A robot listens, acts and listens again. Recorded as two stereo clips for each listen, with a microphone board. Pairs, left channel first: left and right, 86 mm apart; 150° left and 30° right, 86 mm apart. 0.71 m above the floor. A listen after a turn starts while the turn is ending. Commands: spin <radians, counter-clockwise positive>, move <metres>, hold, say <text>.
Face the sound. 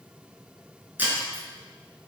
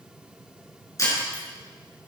spin -2.79
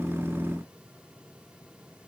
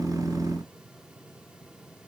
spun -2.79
say I heard breaking glass from this way, but can't make it out now.